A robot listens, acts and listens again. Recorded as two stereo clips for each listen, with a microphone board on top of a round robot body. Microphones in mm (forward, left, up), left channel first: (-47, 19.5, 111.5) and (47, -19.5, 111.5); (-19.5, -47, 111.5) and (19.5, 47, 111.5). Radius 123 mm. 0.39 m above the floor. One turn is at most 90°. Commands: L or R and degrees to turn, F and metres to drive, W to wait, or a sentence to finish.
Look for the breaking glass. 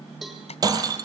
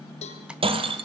L35
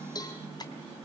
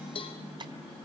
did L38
I heard breaking glass from this way, but can't make it out now.